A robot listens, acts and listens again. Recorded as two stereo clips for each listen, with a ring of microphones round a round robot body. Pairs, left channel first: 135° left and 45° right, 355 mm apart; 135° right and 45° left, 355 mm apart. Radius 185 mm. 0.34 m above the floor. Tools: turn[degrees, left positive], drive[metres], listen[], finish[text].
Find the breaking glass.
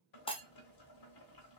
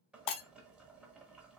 Thought: The breaking glass: 150° right.
Action: turn[-150]
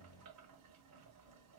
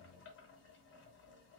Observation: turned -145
Action: finish[I heard breaking glass from this way, but can't make it out now.]